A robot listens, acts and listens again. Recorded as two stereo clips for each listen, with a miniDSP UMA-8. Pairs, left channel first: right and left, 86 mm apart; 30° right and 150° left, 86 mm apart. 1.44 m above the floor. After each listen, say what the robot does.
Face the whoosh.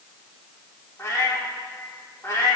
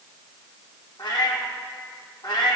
Keep listening.
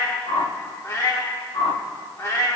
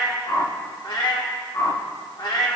Turn 80° right.
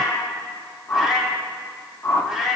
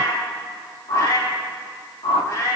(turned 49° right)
Turn 30° right.
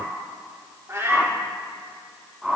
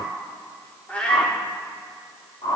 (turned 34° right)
Found it: a whoosh, straight ahead, under 1 m away.